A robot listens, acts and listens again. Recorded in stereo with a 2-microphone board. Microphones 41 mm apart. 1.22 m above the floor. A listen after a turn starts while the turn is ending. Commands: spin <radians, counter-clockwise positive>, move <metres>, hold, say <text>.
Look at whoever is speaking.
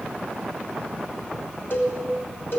hold
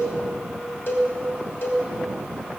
hold
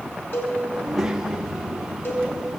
spin -0.52
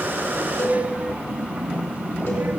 spin -2.36
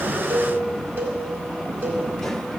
spin 0.17
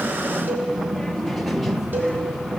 say Facing the child speaking, 1 to 2 m away.